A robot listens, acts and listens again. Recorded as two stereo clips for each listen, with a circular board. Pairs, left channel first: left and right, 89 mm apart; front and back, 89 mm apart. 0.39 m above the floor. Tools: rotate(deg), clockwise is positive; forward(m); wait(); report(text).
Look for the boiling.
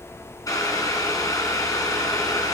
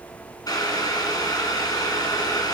rotate(-45)
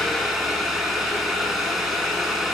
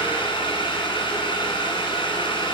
report("Facing the boiling, 1 to 2 m away.")